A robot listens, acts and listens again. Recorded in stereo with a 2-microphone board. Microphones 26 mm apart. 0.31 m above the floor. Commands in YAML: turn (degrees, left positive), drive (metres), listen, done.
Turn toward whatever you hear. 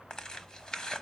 turn: 30
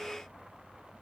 listen: true
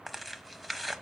done: "Found it: tearing paper, straight ahead, under 1 m away."